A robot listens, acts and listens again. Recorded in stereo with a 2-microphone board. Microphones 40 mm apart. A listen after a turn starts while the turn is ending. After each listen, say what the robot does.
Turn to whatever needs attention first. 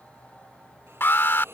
Turn 60° left.
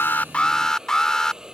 Turn 15° left.
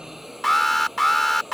Facing the alarm.